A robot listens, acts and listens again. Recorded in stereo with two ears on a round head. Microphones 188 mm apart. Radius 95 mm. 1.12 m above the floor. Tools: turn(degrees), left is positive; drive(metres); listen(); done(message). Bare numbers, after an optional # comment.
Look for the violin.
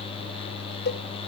listen()
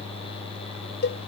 listen()
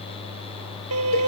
turn(-90)
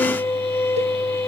# So it is at 10° left.
turn(10)
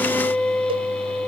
done("Facing the violin.")